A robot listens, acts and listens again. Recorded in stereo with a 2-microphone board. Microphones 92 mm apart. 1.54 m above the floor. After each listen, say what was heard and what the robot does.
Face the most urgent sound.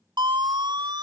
The siren: about 55° right or 125° right. Turn 55° right.
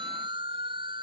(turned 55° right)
So it is at 70° right. Turn 70° right.
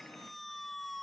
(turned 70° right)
Found it: a siren, straight ahead.